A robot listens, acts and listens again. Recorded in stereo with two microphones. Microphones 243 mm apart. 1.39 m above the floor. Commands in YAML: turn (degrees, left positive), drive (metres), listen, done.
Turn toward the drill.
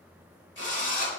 turn: 50
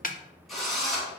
done: "Facing the drill."